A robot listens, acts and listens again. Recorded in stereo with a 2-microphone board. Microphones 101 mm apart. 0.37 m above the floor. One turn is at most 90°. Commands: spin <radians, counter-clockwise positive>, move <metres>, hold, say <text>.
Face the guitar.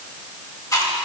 hold
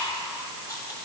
hold
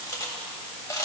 say I can't make out a guitar to turn to.